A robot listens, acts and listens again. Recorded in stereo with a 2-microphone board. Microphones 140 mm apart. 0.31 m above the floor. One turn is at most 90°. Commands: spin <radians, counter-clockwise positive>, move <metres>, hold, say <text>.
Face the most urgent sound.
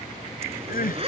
spin 1.57
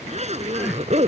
hold
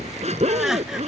hold
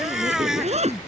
say Facing the crying.